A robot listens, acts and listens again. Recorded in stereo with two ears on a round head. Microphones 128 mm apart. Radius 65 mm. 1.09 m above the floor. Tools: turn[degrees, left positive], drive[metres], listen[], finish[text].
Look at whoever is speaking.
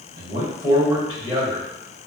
Thought: The man speaking: about 30° right or 150° right.
Action: turn[-30]
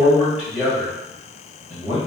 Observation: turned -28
Thought: So it is at 10° right.
Action: turn[-10]
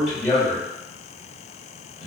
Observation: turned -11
Action: finish[Found it: a man speaking, straight ahead.]